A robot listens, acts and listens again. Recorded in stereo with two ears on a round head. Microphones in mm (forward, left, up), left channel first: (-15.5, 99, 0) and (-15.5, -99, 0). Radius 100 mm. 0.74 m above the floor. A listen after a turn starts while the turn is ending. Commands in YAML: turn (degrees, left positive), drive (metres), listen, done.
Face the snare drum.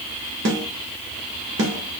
turn: -60
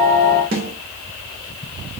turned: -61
turn: -50
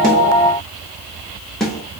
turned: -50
done: "Facing the snare drum, 1 to 2 m away."